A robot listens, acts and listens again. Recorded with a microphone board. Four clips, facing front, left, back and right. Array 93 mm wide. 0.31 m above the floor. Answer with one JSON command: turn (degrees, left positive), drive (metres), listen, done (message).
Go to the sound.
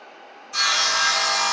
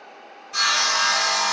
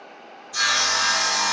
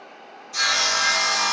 {"turn": 40}
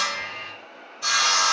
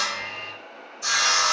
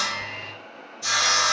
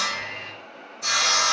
{"drive": 1.0}
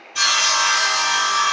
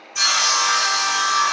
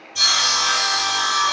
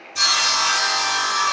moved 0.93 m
{"turn": 10}
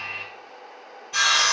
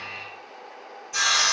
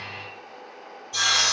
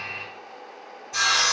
{"drive": 1.0}
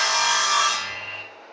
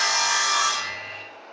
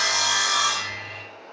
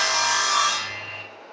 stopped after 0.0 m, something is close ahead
{"done": "I am next to the sawing."}